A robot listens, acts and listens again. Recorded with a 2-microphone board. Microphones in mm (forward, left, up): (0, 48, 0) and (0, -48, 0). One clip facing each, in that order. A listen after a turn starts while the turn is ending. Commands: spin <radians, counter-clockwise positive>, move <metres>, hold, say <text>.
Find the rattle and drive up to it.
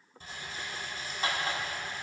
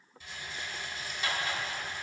spin 0.70
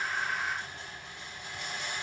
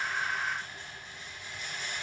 spin 1.66
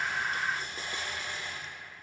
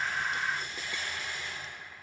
spin 0.70
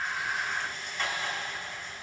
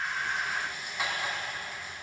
spin -0.17
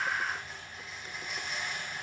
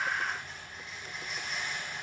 move 1.0
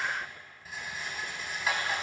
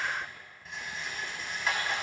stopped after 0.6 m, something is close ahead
say Blocked. The rattle is further on, straight ahead.